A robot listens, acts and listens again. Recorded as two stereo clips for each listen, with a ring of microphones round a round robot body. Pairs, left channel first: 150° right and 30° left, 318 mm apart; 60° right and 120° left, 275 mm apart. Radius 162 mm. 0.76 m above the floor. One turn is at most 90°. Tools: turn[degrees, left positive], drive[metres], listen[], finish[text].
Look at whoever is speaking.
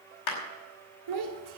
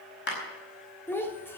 Thought: The child speaking: 20° left.
Action: turn[20]
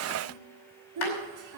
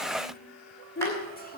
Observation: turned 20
Action: finish[Facing the child speaking.]